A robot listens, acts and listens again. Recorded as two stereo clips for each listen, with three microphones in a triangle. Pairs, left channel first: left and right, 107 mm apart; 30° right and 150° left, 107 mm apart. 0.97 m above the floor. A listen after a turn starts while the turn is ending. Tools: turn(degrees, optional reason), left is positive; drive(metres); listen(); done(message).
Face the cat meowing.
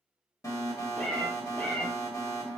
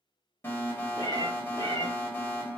turn(degrees=25, reason="The cat meowing: 25° left.")
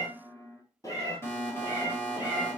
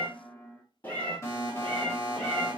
turn(degrees=50, reason="The cat meowing is now 50° left.")
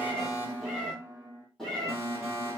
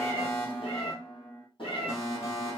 done("Facing the cat meowing, 2 to 4 m away.")